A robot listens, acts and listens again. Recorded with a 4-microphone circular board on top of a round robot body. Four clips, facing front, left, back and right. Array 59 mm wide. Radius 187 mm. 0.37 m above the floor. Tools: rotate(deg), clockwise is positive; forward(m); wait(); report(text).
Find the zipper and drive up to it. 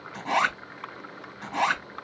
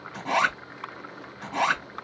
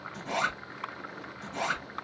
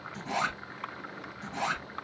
rotate(-55)
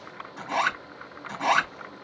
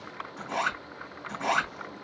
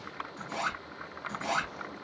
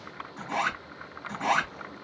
forward(1.0)
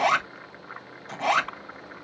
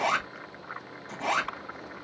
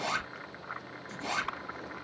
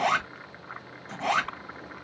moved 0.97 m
forward(1.0)
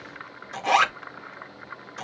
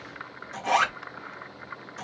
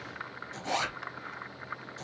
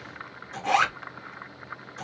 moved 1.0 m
forward(1.0)
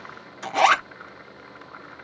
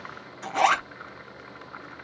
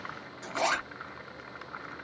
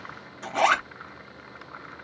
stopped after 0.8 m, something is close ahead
report("I am next to the zipper.")